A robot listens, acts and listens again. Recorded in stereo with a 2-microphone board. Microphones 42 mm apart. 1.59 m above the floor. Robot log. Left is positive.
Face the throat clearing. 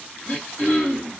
note: The throat clearing: about 60° left or 120° left.
cmd yaw +60
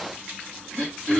note: So it is at 45° left.
cmd yaw +45
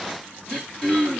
end: Found it: throat clearing, straight ahead, 1 to 2 m away.